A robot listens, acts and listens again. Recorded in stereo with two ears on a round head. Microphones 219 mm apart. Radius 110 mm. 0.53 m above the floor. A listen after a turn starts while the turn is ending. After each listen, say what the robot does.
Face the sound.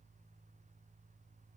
Keep listening.
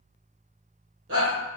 Turn 55° right.
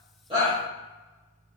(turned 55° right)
Keep listening.
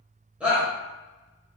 Facing the shout, 1 to 2 m away.